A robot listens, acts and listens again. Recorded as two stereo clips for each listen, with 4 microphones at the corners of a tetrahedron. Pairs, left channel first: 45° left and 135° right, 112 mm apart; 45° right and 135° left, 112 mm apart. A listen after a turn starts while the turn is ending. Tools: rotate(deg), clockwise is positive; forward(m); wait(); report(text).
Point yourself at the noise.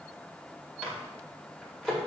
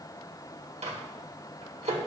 rotate(-130)
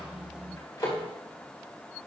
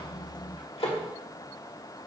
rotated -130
rotate(15)
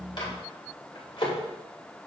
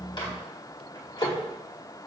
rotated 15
report("Found it: a microwave, straight ahead, 1 to 2 m away.")